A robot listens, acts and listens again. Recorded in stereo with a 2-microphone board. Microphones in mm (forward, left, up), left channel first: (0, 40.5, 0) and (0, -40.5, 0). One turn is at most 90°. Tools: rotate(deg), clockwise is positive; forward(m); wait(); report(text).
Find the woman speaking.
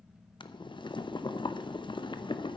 wait()
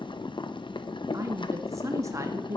rotate(40)
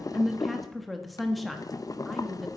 report("Found it: a woman speaking, straight ahead, 1 to 2 m away.")